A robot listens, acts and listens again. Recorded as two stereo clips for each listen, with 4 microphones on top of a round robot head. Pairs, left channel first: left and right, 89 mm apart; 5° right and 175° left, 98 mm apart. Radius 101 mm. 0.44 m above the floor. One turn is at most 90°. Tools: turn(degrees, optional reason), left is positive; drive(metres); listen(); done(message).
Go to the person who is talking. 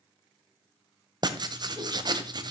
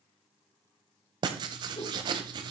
listen()
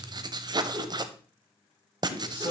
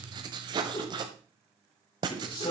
turn(degrees=25, reason="The man speaking: 25° left.")
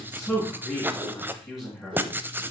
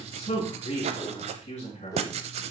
drive(metres=1.0)
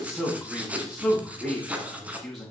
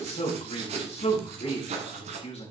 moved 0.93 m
drive(metres=1.0)
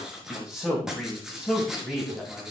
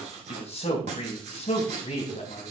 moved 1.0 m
drive(metres=1.0)
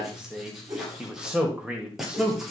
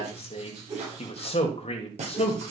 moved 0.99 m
turn(degrees=-10, reason="The man speaking is now 10° right.")
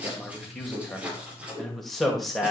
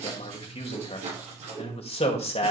drive(metres=1.0)
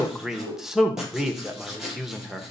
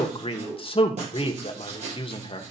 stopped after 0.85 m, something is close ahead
done("I am next to the man speaking.")